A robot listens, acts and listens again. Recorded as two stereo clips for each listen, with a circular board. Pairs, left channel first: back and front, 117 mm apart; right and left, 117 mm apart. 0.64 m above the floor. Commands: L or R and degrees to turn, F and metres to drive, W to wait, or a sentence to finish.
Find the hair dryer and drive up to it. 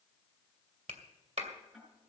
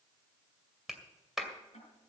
W
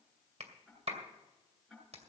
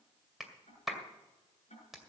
W
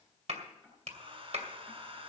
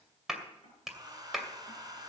L35
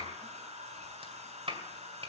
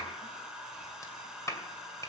F1.0
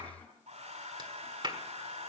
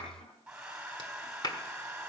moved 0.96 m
L10
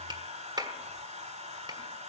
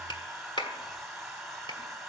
F1.0
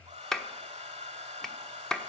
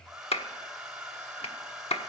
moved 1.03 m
F1.0
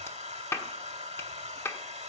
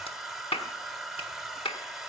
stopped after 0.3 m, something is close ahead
I am next to the hair dryer.